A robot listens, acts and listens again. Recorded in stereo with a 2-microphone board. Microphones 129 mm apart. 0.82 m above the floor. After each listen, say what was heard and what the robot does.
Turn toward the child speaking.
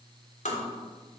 Keep listening.
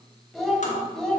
Turn 30° left.
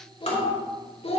So it is at 130° left. Turn 130° left.
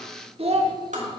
The child speaking is now 55° right. Turn 55° right.
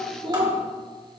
The child speaking is now 35° right. Turn 35° right.
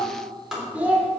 The child speaking is now 10° right. Turn 10° right.
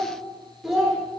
Facing the child speaking, 1 to 2 m away.